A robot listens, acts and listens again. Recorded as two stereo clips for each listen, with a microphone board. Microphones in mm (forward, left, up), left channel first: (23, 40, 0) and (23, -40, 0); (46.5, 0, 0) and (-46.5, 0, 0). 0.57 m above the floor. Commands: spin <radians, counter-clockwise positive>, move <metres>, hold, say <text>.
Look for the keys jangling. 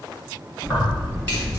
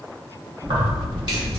spin 2.62
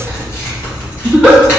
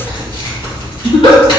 spin 0.52
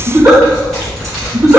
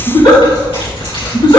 say Found it: keys jangling, straight ahead, 2 to 4 m away.